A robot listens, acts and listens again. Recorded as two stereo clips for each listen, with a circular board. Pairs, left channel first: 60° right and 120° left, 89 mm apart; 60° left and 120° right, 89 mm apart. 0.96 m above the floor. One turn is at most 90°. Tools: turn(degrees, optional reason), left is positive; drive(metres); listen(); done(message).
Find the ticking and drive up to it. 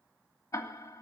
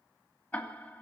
turn(degrees=-10, reason="The ticking: 10° right.")
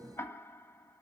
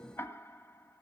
drive(metres=1.0)
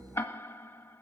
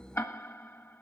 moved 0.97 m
drive(metres=1.0)
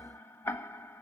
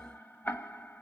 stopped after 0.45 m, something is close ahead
done("Arrived at the ticking, straight ahead.")